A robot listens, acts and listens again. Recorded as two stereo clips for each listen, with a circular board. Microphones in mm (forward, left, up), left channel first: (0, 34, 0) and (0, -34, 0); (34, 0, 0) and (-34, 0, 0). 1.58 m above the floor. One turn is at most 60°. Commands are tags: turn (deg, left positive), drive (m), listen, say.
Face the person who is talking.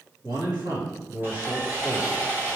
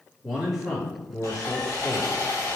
<turn deg="-60"/>
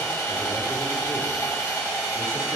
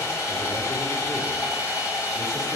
<turn deg="-35"/>
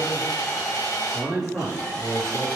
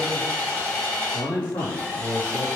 <say>Facing the man speaking.</say>